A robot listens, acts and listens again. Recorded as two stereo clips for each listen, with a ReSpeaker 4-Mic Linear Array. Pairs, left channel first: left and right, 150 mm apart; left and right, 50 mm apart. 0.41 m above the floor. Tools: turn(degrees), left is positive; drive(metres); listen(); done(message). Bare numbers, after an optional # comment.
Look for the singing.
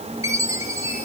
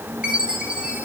listen()
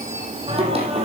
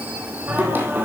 # The singing: about 40° right or 140° right.
turn(-40)
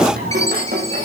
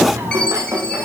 # So it is at 100° right.
turn(-100)
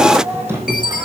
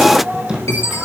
# The singing is now 15° right.
turn(-15)
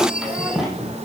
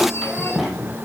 done("Facing the singing.")